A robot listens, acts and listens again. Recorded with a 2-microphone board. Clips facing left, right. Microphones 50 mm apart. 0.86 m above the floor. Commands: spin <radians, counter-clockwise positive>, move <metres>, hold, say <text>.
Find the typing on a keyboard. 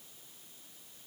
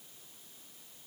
hold
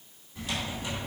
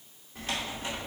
spin -0.70
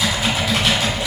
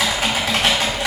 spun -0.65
spin -1.75
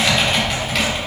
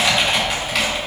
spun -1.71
say Facing the typing on a keyboard.